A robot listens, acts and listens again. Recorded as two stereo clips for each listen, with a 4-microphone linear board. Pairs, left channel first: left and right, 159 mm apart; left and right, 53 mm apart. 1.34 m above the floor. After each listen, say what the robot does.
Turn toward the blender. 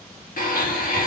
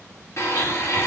Turn 60° left.
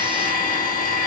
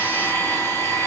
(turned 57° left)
Turn 60° left.
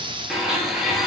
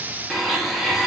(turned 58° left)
Facing the blender, 1 to 2 m away.